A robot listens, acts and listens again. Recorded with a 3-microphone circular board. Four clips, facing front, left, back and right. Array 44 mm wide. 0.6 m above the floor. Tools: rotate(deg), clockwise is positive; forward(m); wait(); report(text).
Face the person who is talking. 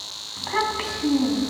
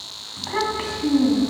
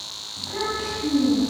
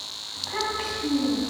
rotate(-20)
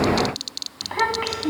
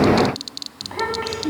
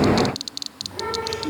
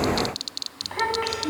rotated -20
report("Facing the child speaking.")